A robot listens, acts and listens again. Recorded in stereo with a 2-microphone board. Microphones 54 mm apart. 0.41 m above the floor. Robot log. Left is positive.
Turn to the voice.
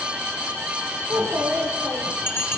note: The child speaking: about 45° right or 135° right.
cmd yaw -45
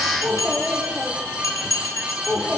end: Facing the child speaking, over 4 m away.